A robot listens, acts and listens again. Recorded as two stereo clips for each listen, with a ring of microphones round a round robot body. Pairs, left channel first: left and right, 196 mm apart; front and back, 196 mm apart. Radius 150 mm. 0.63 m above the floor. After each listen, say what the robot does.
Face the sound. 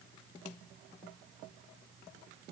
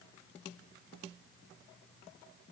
Keep listening.
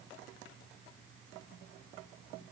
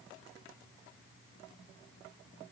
Keep listening.
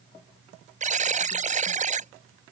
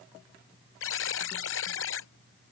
Turn 40° right.
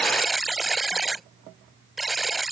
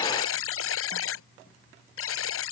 Facing the buzzer.